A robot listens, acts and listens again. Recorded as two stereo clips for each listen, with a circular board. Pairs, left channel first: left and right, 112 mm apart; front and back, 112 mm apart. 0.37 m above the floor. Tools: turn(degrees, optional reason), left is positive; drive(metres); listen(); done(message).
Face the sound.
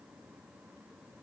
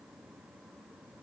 listen()
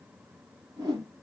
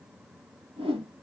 turn(degrees=-140, reason="The whoosh: 140° right.")
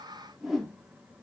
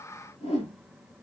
done("Found it: a whoosh, straight ahead.")